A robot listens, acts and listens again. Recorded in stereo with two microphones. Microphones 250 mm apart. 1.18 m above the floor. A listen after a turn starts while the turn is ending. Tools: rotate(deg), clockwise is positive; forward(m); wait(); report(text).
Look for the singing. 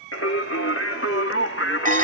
rotate(-55)
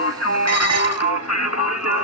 rotate(-75)
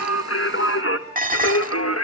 rotate(-75)
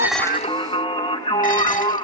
rotate(-20)
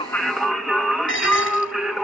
report("Facing the singing.")